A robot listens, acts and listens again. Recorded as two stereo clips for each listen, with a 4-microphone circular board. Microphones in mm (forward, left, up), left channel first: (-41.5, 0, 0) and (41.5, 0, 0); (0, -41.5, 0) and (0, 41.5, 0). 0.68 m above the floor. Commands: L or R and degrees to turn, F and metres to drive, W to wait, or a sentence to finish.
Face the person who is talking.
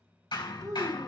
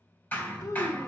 R45
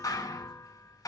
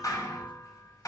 W
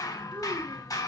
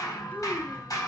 W
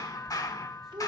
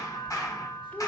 R20
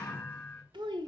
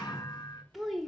Facing the child speaking, 1 to 2 m away.